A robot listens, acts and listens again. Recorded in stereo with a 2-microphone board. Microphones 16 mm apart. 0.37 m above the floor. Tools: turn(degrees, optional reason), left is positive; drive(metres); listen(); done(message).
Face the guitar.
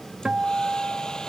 turn(degrees=-55, reason="The guitar: about 55° right or 125° right.")
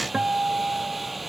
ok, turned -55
turn(degrees=-70, reason="So it is at 70° right.")
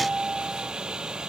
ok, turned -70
turn(degrees=-10, reason="The guitar is now 10° right.")
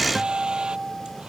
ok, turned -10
done("Facing the guitar.")